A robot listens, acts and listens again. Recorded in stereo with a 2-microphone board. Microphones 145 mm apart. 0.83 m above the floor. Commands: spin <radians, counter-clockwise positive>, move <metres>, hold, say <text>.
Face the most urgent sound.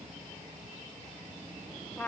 hold
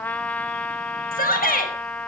spin 1.57
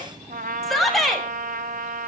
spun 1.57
say Found it: a shout, straight ahead, over 4 m away.